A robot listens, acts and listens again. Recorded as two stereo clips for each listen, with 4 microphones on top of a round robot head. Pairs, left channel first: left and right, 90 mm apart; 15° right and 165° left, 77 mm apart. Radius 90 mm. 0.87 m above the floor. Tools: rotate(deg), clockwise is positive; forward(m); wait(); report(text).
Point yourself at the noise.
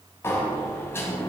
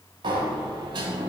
rotate(-150)
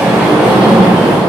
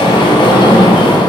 report("Found it: a sliding door, straight ahead, 1 to 2 m away.")